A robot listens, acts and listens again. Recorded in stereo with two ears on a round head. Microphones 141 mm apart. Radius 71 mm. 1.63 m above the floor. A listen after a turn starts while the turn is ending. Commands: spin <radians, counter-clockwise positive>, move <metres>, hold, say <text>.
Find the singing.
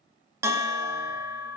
hold
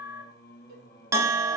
spin 1.05
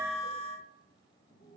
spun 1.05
spin 0.87
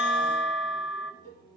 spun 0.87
spin 0.44
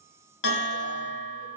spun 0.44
hold
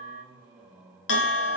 spin -0.17
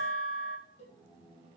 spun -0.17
say Found it: singing, straight ahead.